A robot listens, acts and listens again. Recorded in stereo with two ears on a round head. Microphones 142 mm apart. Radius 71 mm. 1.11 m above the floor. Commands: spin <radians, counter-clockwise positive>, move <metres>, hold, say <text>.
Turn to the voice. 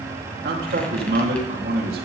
spin -1.13
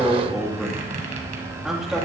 say Facing the man speaking, 2 to 4 m away.